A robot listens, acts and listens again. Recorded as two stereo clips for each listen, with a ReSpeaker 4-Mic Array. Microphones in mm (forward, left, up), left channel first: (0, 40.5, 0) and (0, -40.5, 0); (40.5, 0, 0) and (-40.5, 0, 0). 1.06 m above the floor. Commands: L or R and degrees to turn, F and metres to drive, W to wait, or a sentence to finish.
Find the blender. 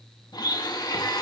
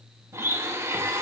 L125
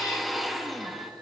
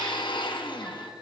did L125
Facing the blender.